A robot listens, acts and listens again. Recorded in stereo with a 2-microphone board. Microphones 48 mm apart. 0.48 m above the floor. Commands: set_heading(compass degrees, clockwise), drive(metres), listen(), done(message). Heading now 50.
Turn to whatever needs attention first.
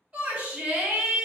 set_heading(80)
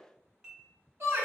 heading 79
set_heading(194)
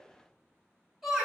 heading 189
set_heading(199)
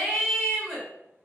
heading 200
done("Found it: a shout, straight ahead.")